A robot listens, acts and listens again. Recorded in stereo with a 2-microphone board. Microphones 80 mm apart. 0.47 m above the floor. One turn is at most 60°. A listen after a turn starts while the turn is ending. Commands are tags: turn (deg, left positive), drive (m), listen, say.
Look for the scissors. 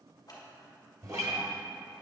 <turn deg="55"/>
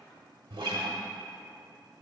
<listen/>
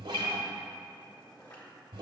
<turn deg="60"/>
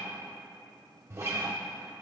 <listen/>
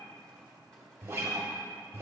<listen/>
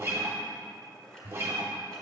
<turn deg="10"/>
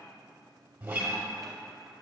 <listen/>
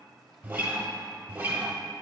<listen/>
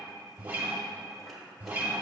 <say>I heard scissors from this way, but can't make it out now.</say>